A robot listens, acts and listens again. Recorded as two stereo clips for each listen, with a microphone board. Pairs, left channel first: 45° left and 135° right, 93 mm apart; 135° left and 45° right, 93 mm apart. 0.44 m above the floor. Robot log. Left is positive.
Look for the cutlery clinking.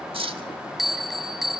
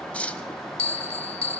note: The cutlery clinking: 150° right.
cmd yaw -150
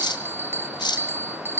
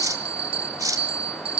end: Facing the cutlery clinking, 1 to 2 m away.